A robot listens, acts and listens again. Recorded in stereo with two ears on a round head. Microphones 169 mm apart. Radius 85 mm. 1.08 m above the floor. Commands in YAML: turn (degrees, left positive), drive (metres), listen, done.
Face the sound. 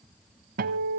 turn: -50
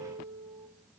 turn: -15
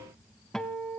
done: "Found it: a guitar, straight ahead."